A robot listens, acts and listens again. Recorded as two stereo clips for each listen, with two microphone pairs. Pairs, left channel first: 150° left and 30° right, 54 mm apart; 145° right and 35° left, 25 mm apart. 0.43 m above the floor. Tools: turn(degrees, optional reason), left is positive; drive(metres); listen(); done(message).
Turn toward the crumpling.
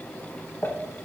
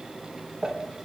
turn(degrees=105, reason="The crumpling: 105° left.")
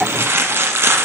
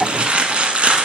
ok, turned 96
done("Facing the crumpling, under 1 m away.")